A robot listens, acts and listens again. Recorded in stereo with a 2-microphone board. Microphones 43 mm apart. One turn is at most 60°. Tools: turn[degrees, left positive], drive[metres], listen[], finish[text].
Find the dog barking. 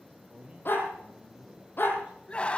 Thought: The dog barking: about 50° left or 130° left.
Action: turn[50]
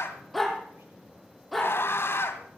Action: finish[Found it: a dog barking, straight ahead.]